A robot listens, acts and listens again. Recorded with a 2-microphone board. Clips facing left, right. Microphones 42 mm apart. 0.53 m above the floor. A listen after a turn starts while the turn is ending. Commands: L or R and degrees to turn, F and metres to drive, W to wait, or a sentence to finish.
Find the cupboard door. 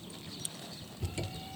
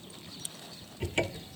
R60
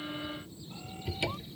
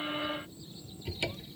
Facing the cupboard door.